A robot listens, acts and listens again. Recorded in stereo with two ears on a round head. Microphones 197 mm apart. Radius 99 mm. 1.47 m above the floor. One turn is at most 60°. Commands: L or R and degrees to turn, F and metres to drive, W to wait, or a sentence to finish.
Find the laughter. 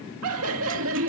R60
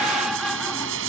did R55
Found it: laughter, straight ahead.